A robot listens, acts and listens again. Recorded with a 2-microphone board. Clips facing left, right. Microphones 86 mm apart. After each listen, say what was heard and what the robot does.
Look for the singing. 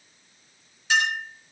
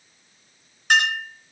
Keep listening.
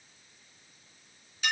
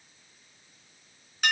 Keep listening.
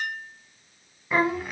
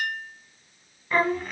Turn 30° left.
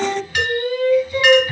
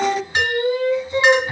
So it is at 25° right. Turn 25° right.
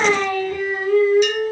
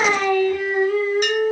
Found it: singing, straight ahead, 1 to 2 m away.